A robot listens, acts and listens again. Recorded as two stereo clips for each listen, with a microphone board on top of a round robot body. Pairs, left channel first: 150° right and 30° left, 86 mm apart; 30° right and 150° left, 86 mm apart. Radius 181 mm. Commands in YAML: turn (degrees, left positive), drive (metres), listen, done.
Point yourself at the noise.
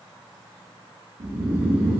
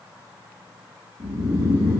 turn: 100
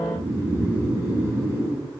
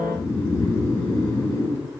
turn: -20
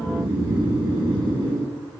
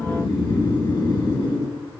done: "Found it: snoring, straight ahead, over 4 m away."